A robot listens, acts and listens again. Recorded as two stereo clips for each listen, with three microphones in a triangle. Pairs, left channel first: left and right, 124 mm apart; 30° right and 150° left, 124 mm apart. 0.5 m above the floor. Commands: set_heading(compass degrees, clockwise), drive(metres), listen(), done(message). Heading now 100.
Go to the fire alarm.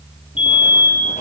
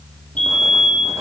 set_heading(50)
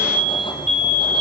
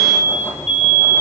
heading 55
drive(1.0)
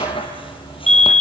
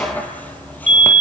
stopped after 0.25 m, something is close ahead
done("Blocked. The fire alarm is further on, straight ahead.")